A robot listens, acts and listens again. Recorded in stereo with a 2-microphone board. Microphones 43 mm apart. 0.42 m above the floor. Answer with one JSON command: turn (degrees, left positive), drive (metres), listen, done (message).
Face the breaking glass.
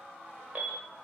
{"listen": true}
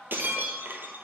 {"turn": -55}
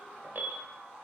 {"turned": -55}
{"listen": true}
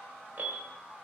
{"done": "I heard breaking glass, but can't make it out now. It was about straight ahead or 70° right."}